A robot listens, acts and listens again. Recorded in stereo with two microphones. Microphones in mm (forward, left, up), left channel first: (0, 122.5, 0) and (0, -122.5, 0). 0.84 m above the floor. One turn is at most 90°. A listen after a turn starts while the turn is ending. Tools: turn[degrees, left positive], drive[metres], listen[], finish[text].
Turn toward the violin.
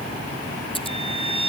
Thought: The violin: about 20° right or 160° right.
Action: turn[-20]
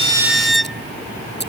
Action: finish[Found it: a violin, straight ahead.]